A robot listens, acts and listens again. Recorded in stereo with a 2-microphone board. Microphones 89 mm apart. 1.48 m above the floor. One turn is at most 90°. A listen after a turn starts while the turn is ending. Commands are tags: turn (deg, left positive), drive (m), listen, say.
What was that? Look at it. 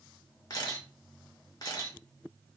<turn deg="45"/>
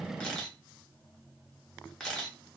<turn deg="10"/>
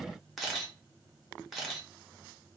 <say>Facing the camera shutter.</say>